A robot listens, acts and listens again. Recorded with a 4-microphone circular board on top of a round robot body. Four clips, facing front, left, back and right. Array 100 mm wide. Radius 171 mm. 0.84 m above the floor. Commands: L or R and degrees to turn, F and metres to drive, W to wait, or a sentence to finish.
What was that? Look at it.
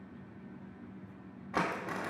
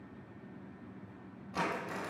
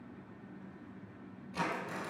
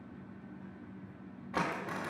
R25
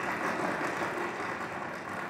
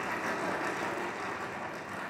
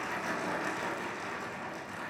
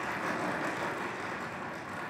Found it: crumpling, straight ahead, 2 to 4 m away.